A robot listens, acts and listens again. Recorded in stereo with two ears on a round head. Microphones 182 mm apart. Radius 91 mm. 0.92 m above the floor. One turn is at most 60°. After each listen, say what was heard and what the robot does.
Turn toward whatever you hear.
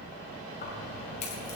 The keys jangling: about 35° left or 145° left. Turn 35° left.
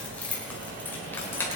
So it is at 10° left. Turn 10° left.
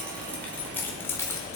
The keys jangling is now 15° left. Turn 15° left.
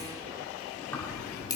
The keys jangling is now 20° left. Turn 20° left.
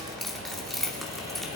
Found it: keys jangling, straight ahead, 1 to 2 m away.